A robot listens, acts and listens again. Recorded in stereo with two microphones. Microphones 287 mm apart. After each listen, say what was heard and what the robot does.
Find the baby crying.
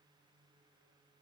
Keep listening.
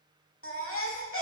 The baby crying: about 50° left or 130° left. Turn 50° left.
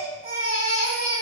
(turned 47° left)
So it is at 80° left. Turn 80° left.
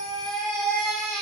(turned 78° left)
Facing the baby crying, 1 to 2 m away.